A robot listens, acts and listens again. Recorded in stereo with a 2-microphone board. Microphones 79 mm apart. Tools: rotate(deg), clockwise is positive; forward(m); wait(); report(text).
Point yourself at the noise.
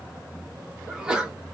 rotate(30)
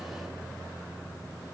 wait()
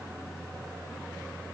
report("I heard a sneeze, but can't make it out now. It was about 20° left or 140° right.")